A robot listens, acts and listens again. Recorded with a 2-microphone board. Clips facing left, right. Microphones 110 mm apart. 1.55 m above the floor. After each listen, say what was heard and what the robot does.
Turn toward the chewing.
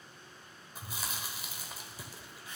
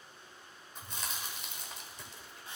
Turn 30° left.
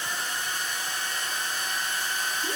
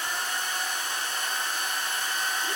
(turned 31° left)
Keep listening.
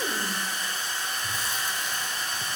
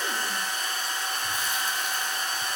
Keep listening.
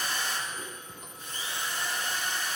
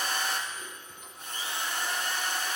I heard chewing, but can't make it out now. It was about 25° right or 145° left.